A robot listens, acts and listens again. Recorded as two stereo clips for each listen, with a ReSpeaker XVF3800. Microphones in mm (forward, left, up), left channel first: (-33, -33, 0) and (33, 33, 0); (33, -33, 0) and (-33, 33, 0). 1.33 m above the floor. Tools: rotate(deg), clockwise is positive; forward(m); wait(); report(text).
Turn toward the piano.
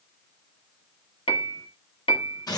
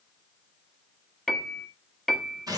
rotate(130)
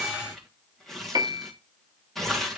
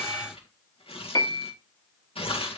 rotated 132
report("Found it: a piano, straight ahead.")